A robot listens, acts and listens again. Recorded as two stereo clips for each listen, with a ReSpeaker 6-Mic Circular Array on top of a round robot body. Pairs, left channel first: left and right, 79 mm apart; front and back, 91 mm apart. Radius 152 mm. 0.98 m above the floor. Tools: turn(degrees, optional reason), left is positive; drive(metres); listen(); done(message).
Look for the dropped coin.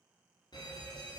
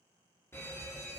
listen()
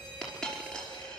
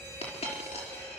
turn(degrees=10, reason="The dropped coin: 10° left.")
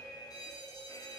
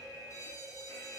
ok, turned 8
done("I heard a dropped coin from this way, but can't make it out now.")